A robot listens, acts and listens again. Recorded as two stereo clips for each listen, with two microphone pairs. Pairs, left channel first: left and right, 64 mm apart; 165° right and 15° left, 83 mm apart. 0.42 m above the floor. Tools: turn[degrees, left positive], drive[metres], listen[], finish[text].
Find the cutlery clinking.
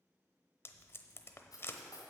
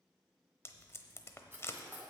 Thought: The cutlery clinking: 80° left.
Action: turn[80]
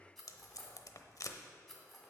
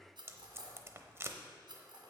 Thought: The cutlery clinking is now 10° left.
Action: turn[10]
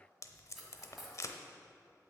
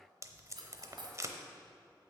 Action: finish[Facing the cutlery clinking.]